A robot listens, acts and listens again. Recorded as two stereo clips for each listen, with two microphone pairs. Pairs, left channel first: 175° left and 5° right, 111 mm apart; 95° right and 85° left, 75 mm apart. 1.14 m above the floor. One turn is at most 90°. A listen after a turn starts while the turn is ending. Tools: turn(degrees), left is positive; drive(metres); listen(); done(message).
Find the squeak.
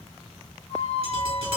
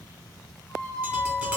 turn(degrees=-90)
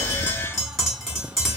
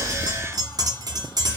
turn(degrees=-80)
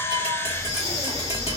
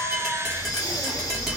listen()
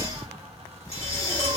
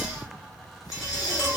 done("I heard a squeak from this way, but can't make it out now.")